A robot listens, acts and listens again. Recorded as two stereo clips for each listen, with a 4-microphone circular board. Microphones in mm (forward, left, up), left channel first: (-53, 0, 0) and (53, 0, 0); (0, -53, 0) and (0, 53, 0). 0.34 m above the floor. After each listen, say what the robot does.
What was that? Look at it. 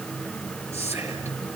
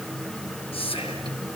Turn 65° right.
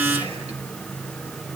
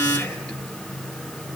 Keep listening.
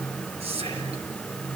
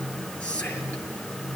Turn 10° right.
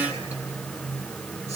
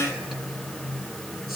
Keep listening.
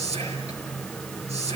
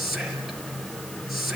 Found it: whispering, straight ahead, over 4 m away.